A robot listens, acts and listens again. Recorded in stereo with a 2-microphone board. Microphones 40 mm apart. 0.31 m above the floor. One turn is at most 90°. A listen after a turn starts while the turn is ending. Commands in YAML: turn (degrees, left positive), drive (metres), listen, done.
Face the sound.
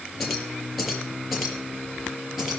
turn: -30
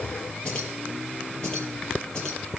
turn: 20
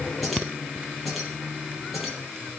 done: "Facing the keys jangling."